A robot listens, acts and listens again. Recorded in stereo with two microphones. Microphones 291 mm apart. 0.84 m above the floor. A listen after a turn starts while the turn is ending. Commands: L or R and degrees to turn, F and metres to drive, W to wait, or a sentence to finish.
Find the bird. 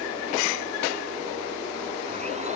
W
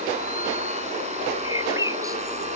R30
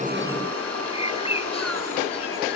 L20
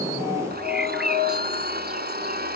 W
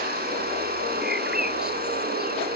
W
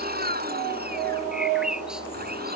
Facing the bird.